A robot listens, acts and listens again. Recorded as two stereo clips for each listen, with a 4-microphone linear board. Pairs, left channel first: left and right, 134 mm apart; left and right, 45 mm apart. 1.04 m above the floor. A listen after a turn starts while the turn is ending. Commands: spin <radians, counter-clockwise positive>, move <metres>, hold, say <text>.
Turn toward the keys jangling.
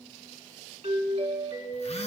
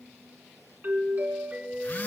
hold
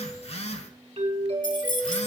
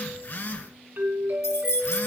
spin 1.57
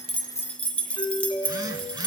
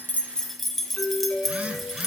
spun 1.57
spin 0.17
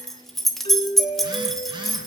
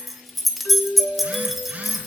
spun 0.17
say Facing the keys jangling.